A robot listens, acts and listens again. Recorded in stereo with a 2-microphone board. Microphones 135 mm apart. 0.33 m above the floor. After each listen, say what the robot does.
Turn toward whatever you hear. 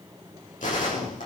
Turn 70° left.
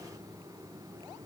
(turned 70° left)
Keep listening.
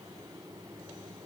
I heard a gunshot, but can't make it out now. It was about straight ahead or 40° left.